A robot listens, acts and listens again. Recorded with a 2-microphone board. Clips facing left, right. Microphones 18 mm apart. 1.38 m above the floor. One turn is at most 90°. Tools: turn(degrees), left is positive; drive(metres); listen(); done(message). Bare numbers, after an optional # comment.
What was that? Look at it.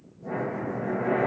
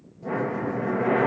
# The breathing: about 40° right or 140° right.
turn(-40)
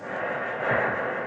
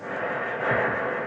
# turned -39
done("Found it: breathing, straight ahead.")